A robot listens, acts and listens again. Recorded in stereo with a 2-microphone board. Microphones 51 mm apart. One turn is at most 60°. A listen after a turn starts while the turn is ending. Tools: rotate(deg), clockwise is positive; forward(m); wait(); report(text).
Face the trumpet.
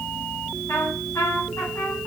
rotate(-60)
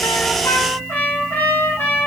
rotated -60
rotate(-45)
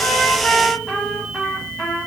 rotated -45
report("Facing the trumpet, 1 to 2 m away.")